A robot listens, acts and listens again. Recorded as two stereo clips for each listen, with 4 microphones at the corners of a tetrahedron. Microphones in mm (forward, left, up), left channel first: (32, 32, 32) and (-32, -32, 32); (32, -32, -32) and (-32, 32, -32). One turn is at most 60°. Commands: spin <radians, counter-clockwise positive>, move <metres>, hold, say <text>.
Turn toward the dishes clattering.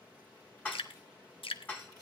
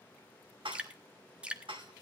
spin 1.05
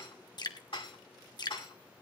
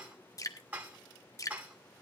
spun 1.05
spin 1.05
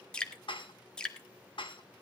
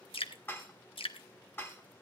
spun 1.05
spin 0.35
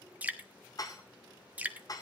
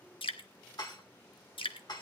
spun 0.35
say Facing the dishes clattering.